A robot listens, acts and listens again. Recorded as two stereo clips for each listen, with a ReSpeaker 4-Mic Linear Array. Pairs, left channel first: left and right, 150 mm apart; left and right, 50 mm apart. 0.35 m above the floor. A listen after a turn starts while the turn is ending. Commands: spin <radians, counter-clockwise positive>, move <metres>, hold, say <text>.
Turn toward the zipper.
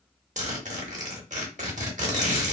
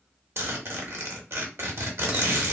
spin -0.96
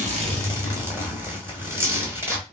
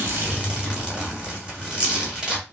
spin -0.35
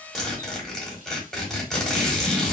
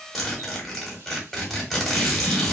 say Found it: a zipper, straight ahead, 1 to 2 m away.